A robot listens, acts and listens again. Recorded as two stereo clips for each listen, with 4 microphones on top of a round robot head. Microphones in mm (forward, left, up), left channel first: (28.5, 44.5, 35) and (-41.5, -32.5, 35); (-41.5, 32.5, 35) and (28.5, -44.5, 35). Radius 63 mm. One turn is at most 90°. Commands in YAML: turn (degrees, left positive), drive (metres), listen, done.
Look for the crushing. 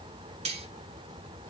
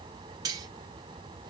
listen: true
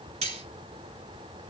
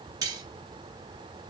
listen: true
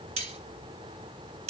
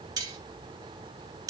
done: "I can't make out crushing to turn to."